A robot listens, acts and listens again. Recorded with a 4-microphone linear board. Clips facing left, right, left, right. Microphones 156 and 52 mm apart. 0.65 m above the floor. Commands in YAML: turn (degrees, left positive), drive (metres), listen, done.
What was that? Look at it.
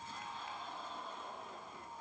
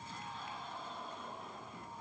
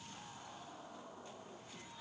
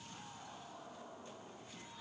listen: true
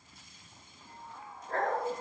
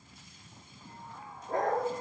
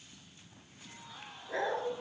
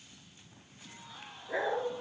turn: -30
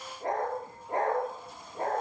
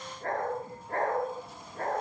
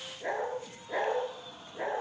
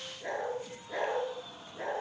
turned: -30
turn: 20
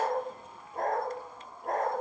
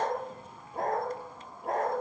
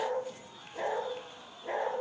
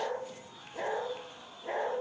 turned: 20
done: "Found it: a dog barking, straight ahead."